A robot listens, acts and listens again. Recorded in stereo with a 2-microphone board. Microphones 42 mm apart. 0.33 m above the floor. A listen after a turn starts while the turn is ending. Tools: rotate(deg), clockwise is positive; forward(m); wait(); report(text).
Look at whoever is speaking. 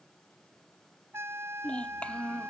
rotate(-25)
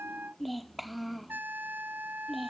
report("Found it: a child speaking, straight ahead.")